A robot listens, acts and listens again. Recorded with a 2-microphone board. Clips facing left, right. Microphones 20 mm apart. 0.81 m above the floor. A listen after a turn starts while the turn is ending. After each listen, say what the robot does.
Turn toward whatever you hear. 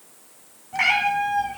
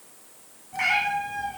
Turn 25° left.
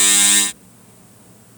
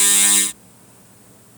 Keep listening.
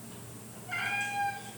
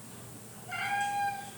Found it: a cat meowing, straight ahead, over 4 m away.